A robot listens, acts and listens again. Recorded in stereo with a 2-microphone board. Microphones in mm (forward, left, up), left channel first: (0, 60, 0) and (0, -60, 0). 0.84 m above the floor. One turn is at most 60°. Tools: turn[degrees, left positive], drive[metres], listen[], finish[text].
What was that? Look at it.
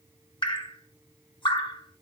Thought: The dripping: about 40° left or 140° left.
Action: turn[40]
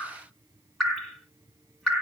Action: finish[Found it: dripping, straight ahead.]